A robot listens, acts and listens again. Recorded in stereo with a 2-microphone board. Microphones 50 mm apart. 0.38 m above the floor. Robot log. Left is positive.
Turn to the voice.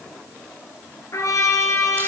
cmd idle
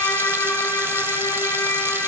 cmd idle
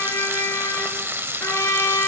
end: I can't make out anyone speaking, only a trumpet and frying.